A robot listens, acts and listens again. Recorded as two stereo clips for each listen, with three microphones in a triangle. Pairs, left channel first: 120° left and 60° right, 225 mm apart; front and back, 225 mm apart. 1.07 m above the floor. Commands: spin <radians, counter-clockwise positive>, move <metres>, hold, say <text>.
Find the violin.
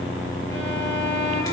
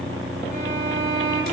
spin 2.44
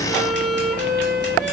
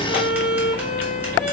say Facing the violin, 2 to 4 m away.